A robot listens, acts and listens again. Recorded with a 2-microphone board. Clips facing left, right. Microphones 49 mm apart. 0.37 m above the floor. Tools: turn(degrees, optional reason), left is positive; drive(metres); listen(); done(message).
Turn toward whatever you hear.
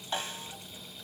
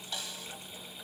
turn(degrees=40, reason="The snare drum: about 40° left or 140° left.")
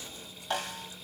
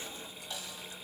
turn(degrees=95, reason="So it is at 95° left.")
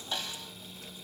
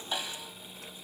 turn(degrees=-15, reason="The snare drum is now 15° right.")
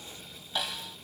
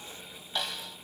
done("Facing the snare drum.")